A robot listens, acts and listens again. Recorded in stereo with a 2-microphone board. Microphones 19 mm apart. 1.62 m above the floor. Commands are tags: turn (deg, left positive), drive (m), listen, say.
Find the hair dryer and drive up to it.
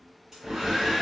<turn deg="-35"/>
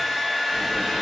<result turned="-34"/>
<drive m="1.0"/>
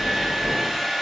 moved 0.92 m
<turn deg="-20"/>
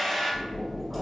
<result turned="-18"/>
<drive m="1.0"/>
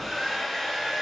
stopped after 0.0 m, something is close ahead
<say>Arrived at the hair dryer, straight ahead.</say>